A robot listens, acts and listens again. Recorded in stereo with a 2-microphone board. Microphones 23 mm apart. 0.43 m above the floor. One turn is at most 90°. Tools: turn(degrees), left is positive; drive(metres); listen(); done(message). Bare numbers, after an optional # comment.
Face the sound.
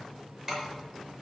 # The keys jangling: about 35° right or 145° right.
turn(-35)
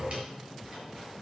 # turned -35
listen()
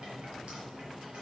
listen()
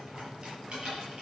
# So it is at 125° right.
turn(-90)
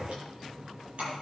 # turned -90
# The keys jangling is now 50° right.
turn(-50)
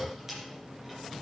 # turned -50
done("Facing the keys jangling.")